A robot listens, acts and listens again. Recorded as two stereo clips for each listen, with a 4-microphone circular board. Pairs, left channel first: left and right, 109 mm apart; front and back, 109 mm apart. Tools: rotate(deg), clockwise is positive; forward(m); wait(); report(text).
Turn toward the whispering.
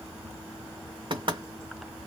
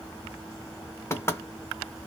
wait()
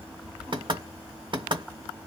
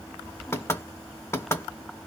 wait()
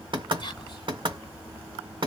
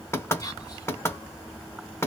rotate(-55)
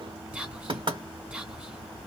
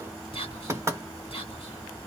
rotate(10)
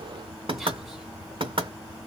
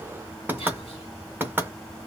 report("Found it: whispering, straight ahead, 2 to 4 m away.")